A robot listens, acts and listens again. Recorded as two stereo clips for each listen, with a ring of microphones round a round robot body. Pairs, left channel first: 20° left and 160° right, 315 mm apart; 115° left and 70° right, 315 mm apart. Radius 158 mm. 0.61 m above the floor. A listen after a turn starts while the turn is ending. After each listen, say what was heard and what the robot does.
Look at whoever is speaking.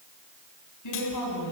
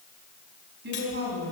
The woman speaking: 10° right. Turn 10° right.
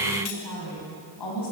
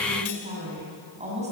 Facing the woman speaking.